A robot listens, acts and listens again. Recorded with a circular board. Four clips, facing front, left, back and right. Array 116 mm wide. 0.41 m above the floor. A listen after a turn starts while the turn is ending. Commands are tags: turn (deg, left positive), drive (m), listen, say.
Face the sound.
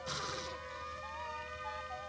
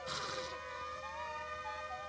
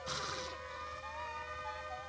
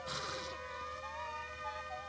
<listen/>
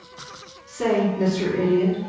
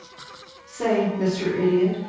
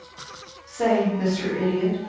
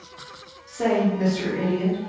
<turn deg="-140"/>
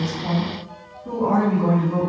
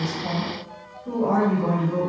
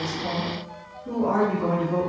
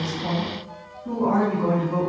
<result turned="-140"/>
<turn deg="-45"/>
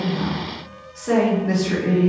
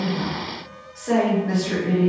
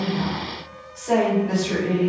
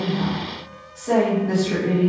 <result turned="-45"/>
<say>Found it: a woman speaking, straight ahead, 2 to 4 m away.</say>